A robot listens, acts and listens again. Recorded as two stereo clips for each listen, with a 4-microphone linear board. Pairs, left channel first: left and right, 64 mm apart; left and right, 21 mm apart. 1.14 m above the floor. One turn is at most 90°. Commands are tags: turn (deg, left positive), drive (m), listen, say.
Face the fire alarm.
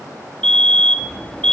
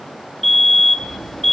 <turn deg="30"/>
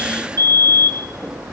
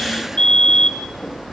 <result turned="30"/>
<turn deg="90"/>
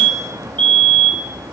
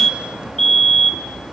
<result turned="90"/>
<turn deg="20"/>
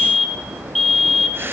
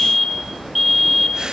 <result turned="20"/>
<say>Facing the fire alarm, over 4 m away.</say>